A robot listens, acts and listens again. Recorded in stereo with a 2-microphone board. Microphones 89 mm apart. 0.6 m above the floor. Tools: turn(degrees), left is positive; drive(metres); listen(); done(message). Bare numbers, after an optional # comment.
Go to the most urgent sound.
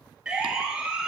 turn(-30)
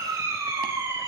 # So it is at 140° right.
turn(-140)
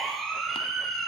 drive(1.0)
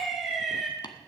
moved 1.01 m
drive(1.0)
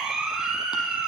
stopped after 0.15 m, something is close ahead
done("Blocked. The siren is further on, straight ahead.")